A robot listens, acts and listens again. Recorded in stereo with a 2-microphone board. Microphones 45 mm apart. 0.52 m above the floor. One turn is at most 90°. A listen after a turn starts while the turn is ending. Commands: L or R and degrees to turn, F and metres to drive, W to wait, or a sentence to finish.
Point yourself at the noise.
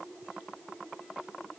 W
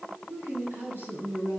R65
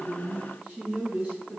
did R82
R35
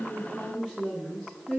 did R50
L15
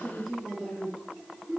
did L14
Found it: a woman speaking, straight ahead.